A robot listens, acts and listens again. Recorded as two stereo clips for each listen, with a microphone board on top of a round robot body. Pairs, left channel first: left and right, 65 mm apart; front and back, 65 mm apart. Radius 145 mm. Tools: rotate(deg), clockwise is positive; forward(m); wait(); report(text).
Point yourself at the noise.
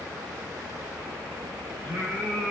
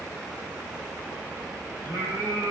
rotate(-180)
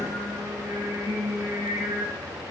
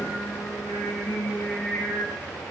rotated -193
rotate(60)
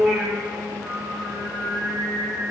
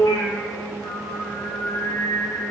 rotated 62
report("Facing the singing.")